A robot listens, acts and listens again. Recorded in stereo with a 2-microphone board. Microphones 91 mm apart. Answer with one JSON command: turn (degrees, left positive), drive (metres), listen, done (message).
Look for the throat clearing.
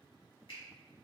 {"listen": true}
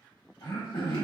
{"turn": 60}
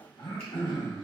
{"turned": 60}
{"turn": 60}
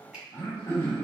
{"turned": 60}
{"turn": 35}
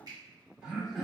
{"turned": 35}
{"turn": -10}
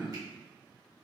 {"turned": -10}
{"done": "Facing the throat clearing, under 1 m away."}